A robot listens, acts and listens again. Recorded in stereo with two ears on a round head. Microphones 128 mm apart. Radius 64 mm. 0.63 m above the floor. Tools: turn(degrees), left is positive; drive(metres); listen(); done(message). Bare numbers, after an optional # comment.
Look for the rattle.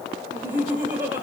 listen()
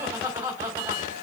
listen()
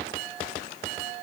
done("I can't make out a rattle, only laughter.")